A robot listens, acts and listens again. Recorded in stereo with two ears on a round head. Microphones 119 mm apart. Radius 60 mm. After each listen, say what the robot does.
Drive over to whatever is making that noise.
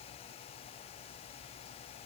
Keep listening.
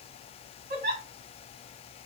Turn 60° right.
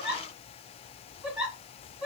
Turn 10° right.
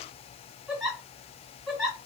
Drive 1.0 m forward.
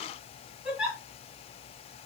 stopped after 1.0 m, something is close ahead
I am next to the giggle.